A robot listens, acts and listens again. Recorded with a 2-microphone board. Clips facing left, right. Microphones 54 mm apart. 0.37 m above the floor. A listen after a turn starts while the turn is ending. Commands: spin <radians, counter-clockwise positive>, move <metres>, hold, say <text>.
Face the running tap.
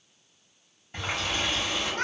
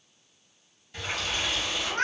spin 0.61
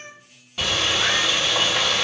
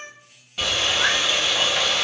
say Facing the running tap.